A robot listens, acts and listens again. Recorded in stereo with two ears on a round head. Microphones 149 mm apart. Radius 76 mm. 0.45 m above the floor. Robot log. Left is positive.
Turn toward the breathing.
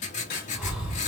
cmd yaw +30
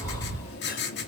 note: So it is at 150° left.
cmd yaw +150
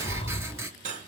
note: The breathing is now 35° left.
cmd yaw +35
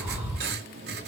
note: The breathing is now 15° right.
cmd yaw -15
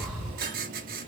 end: Found it: breathing, straight ahead, 1 to 2 m away.